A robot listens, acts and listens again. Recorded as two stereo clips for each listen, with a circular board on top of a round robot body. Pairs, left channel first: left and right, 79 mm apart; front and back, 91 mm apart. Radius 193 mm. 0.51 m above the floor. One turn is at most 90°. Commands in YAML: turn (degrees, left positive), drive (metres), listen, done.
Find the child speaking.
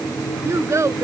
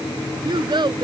turn: -90
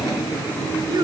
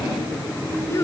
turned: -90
turn: -55
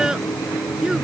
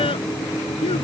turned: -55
listen: true
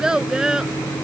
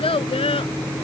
turn: -10
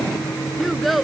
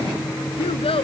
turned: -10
done: "Facing the child speaking."